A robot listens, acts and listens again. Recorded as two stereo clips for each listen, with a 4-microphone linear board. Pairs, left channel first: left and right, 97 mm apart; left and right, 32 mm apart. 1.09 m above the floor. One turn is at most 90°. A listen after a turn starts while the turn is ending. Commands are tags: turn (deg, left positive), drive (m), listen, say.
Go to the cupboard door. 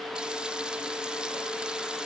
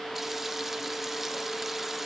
<listen/>
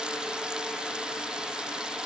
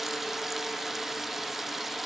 <listen/>
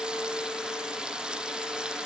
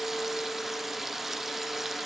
<say>I can't make out a cupboard door to turn to.</say>